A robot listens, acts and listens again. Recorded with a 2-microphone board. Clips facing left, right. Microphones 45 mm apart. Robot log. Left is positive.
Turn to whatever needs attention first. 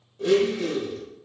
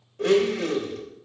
cmd idle
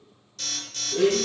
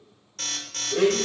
note: The alarm: about 50° right or 130° right.
cmd yaw -50
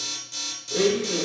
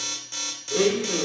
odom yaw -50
note: So it is at 70° right.
cmd yaw -70
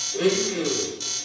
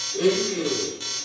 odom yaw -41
note: The alarm is now 25° right.
cmd yaw -25
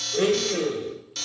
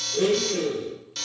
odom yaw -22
end: Found it: an alarm, straight ahead.